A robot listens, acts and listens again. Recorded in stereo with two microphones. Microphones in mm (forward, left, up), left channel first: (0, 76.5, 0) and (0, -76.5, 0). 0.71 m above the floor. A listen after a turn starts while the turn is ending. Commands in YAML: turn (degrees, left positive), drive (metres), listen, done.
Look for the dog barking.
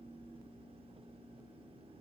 listen: true
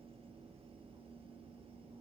listen: true
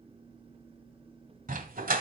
turn: -90
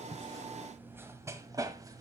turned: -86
turn: -25
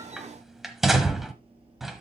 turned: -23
done: "Facing the dog barking."